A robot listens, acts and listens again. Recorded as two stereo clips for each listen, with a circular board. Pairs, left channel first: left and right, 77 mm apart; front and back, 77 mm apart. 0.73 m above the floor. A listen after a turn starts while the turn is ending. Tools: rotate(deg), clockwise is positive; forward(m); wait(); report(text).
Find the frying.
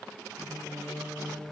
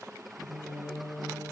wait()
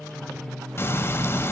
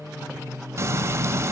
rotate(-140)
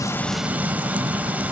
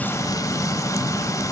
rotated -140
rotate(25)
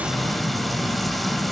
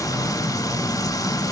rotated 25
report("Found it: frying, straight ahead.")